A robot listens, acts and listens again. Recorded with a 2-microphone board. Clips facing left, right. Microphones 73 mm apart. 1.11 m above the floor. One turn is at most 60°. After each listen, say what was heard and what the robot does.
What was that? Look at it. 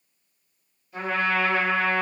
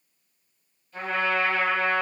The trumpet: about 15° left or 165° left. Turn 15° left.
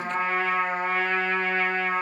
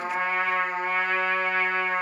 Found it: a trumpet, straight ahead, 1 to 2 m away.